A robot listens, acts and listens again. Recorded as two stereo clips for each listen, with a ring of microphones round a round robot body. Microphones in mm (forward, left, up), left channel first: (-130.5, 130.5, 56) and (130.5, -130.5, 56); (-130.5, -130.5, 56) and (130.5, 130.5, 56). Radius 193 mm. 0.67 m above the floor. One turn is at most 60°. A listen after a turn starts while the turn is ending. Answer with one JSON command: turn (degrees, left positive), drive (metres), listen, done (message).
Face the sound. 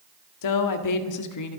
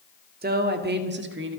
{"turn": 60}
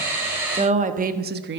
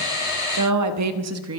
{"done": "Found it: a woman speaking, straight ahead, 1 to 2 m away."}